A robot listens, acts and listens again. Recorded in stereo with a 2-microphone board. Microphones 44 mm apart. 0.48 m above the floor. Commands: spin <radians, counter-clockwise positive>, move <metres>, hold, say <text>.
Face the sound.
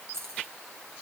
spin -1.57
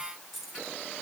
say Facing the keys jangling.